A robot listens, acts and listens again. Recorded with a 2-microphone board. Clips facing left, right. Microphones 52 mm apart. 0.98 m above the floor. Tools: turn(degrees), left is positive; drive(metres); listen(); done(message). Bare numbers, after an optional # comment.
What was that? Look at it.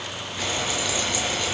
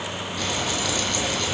# The frying: about 15° left or 165° left.
turn(15)
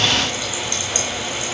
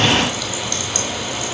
# So it is at 150° left.
turn(150)
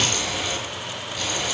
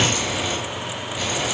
# The frying is now 15° right.
turn(-15)
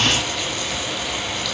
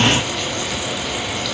done("Found it: frying, straight ahead, over 4 m away.")